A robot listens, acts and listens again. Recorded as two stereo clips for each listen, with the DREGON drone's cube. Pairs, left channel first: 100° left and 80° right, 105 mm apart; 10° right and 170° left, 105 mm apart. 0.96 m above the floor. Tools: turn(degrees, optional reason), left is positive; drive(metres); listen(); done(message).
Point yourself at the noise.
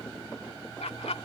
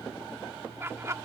turn(degrees=110, reason="The laughter: 110° left.")
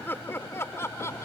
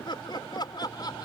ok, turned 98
turn(degrees=35, reason="The laughter is now 35° left.")
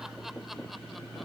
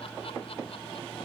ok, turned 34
listen()
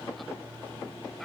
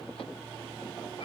listen()
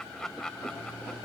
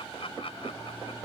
turn(degrees=15, reason="The laughter is now 15° left.")
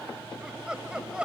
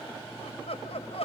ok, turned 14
done("Facing the laughter.")